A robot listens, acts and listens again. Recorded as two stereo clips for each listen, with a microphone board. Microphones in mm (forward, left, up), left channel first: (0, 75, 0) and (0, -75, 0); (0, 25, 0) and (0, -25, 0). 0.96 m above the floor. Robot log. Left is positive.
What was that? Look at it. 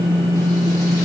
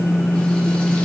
cmd idle
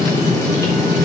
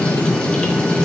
cmd idle
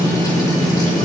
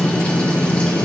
end: I can't make out anything to turn to.